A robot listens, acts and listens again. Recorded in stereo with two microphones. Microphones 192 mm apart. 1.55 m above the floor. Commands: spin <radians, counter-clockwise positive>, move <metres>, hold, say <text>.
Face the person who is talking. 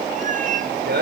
spin -1.05
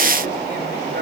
hold
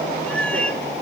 hold
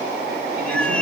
say I heard a man speaking, but can't make it out now. It was about straight ahead or 60° right.